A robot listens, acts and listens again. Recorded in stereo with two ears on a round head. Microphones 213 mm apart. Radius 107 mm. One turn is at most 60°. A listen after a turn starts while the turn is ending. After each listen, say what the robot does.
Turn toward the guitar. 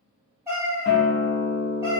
Turn 60° left.
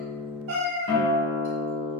Turn 60° left.
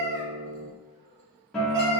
Found it: a guitar, straight ahead.